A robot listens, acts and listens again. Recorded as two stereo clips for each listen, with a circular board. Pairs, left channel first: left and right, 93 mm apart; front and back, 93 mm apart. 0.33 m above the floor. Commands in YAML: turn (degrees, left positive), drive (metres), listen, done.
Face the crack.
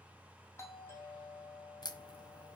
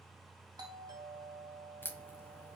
turn: 60
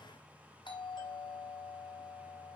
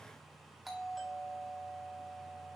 done: "Facing where the crack came from. I can't hear it now."